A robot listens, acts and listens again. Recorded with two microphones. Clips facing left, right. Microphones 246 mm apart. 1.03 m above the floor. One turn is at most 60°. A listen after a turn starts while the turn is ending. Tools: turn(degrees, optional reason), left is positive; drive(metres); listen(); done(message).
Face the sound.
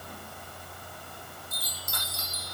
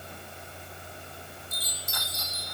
turn(degrees=50, reason="The chime: about 50° left or 130° left.")
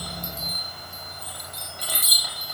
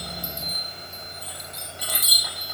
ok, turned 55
done("Found it: a chime, straight ahead.")